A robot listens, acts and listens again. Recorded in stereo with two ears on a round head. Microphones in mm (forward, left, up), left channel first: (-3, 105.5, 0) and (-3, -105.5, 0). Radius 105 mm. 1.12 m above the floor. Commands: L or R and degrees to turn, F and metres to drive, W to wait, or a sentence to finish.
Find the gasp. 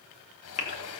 L30
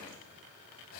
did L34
W
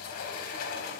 I heard a gasp, but can't make it out now. It was about straight ahead or 115° left.